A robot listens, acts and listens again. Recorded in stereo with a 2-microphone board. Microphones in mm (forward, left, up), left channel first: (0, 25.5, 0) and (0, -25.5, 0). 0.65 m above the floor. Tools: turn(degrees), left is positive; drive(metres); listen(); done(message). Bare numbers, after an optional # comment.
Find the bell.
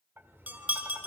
# The bell: about 35° right or 145° right.
turn(-35)
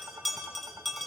done("Facing the bell, 2 to 4 m away.")